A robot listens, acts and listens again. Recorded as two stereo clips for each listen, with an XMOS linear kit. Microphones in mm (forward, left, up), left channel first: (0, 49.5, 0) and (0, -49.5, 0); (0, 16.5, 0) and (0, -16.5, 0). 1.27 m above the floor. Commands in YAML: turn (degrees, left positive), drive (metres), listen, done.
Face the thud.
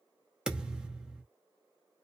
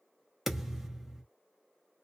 turn: -30
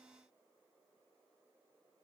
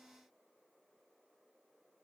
listen: true
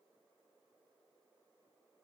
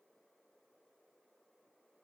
done: "I heard a thud, but can't make it out now. It was about 20° left or 140° right."